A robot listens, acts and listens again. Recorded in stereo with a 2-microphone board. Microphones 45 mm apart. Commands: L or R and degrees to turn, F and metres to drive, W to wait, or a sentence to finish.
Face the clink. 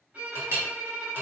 R60
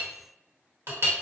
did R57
R60
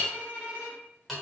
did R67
Facing the clink.